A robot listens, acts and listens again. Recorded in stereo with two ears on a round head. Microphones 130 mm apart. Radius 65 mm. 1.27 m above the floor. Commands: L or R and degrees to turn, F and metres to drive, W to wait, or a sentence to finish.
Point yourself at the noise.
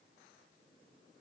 W
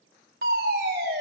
R75
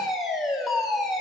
Facing the fire alarm.